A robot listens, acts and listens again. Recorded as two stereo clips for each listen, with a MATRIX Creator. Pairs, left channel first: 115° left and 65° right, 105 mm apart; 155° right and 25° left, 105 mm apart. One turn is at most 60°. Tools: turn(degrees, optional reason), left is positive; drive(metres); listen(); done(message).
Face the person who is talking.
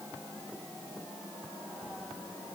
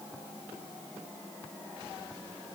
listen()
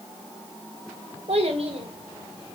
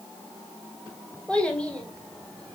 turn(degrees=-60, reason="The child speaking: 75° right.")
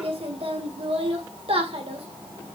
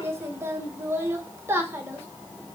turn(degrees=-45, reason="The child speaking is now 45° right.")
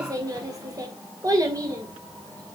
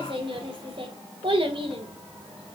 turn(degrees=-10, reason="The child speaking is now 10° right.")
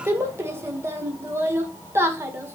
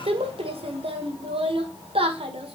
done("Found it: a child speaking, straight ahead.")